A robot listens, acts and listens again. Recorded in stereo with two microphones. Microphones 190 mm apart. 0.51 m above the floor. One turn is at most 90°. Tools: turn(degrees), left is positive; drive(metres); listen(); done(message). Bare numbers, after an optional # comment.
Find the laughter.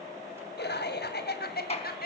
# The laughter: about 55° left or 125° left.
turn(55)
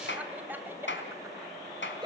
# So it is at 20° right.
turn(-20)
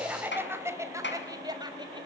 # The laughter is now 20° right.
turn(-20)
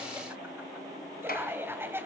# The laughter is now 10° right.
turn(-10)
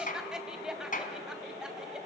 done("Found it: laughter, straight ahead.")